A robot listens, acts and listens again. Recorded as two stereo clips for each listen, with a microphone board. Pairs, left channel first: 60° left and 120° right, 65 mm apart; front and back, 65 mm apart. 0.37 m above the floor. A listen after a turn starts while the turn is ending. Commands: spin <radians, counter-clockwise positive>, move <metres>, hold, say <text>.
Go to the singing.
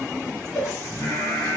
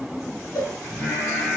spin 0.87
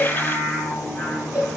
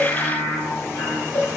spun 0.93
move 1.0
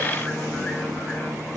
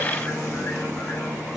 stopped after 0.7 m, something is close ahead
say I am next to the singing.